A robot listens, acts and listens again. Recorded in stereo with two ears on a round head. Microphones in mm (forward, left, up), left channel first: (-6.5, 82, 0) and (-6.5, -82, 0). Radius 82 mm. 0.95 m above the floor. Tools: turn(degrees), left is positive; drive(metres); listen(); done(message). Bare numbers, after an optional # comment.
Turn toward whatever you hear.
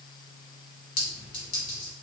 # The clink: about 30° left or 150° left.
turn(30)
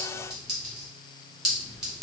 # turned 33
done("Facing the clink.")